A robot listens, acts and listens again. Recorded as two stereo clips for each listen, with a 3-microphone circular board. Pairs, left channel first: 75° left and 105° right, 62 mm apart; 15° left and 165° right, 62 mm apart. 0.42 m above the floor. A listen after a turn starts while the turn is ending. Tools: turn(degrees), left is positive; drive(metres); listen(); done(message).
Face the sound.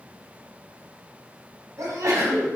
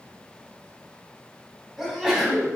turn(degrees=-80)
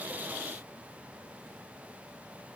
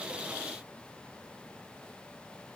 done("Facing where the sneeze came from. I can't hear it now.")